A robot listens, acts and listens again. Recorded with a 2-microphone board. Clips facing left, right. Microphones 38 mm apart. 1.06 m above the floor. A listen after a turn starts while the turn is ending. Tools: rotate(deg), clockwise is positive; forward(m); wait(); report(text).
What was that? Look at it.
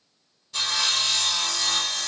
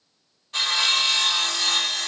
rotate(45)
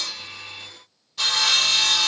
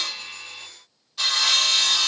report("Facing the sawing.")